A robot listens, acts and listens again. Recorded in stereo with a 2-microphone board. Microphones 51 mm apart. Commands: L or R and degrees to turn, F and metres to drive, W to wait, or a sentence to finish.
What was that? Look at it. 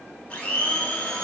L25
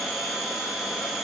Found it: a blender, straight ahead.